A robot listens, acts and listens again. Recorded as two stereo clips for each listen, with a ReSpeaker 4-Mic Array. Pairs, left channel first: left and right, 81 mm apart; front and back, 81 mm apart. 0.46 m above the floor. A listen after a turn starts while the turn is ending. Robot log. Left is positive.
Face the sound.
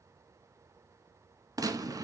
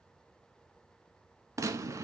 note: The gunshot: 130° right.
cmd yaw -130
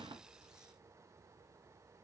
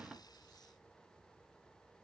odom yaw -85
note: Nothing new. It was at 45° right.
cmd yaw -45
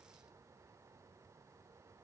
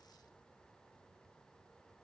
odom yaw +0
note: Nothing new. It was at 45° right.
cmd yaw -45
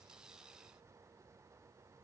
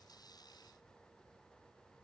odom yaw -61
note: Nothing new. It was at 15° left.
cmd yaw +15
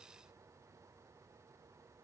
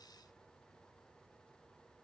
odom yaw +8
end: Facing where the gunshot came from. I can't hear it now.